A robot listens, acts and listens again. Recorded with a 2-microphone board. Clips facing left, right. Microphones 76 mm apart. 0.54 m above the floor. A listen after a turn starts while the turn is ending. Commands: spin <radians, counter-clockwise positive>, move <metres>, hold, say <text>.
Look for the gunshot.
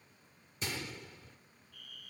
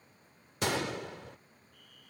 spin -1.13
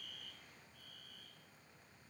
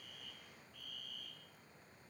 hold
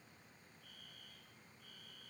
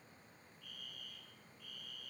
say I heard a gunshot, but can't make it out now. It was about straight ahead or 50° right.